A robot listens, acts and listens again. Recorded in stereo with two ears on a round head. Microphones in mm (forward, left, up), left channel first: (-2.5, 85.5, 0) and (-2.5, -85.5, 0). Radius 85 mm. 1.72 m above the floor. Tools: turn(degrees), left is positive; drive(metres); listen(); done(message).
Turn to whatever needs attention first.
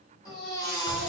turn(degrees=20)
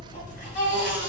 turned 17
turn(degrees=145)
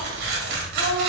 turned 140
listen()
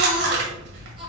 listen()
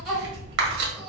done("I heard a baby crying from this way, but can't make it out now.")